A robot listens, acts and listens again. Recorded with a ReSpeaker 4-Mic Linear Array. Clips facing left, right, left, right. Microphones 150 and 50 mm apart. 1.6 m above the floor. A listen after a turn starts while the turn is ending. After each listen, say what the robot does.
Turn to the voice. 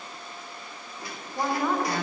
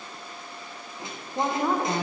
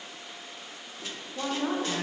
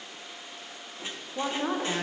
Turn 20° right.
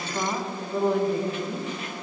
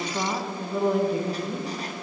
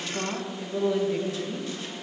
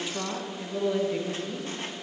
Facing the woman speaking.